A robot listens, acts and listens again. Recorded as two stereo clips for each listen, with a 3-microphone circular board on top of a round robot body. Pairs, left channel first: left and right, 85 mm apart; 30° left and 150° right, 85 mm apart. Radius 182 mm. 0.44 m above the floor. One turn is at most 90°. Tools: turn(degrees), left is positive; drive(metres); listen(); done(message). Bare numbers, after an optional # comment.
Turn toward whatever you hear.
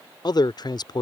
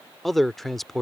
# The man speaking: 120° left.
turn(90)
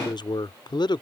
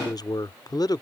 # The man speaking is now 65° left.
turn(65)
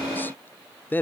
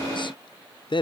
# The man speaking is now 25° left.
turn(25)
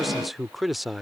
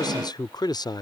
done("Found it: a man speaking, straight ahead.")